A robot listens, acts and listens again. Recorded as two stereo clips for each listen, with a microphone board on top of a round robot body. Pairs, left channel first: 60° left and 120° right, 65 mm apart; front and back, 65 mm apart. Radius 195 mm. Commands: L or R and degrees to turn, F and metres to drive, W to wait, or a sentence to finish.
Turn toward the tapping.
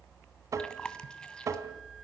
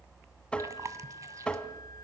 R75
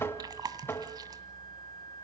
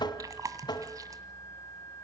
Facing the tapping.